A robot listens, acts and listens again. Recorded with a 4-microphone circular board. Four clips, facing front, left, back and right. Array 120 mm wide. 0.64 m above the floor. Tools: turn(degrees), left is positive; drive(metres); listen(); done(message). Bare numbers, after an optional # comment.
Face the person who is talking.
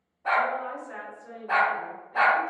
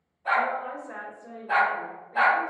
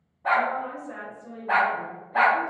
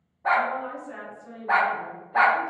# The woman speaking: 85° left.
turn(85)
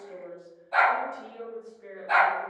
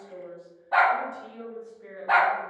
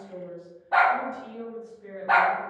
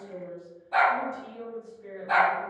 # The woman speaking is now 25° left.
turn(25)
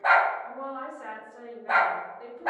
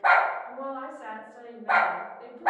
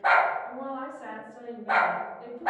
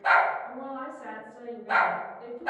# The woman speaking is now 10° left.
turn(10)
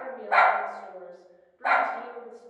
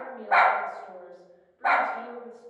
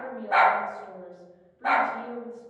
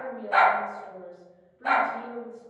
done("Facing the woman speaking.")